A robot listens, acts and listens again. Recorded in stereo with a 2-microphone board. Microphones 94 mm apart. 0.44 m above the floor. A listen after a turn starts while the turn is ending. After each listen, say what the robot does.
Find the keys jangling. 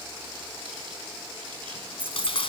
Turn 15° right.
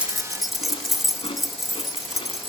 Facing the keys jangling.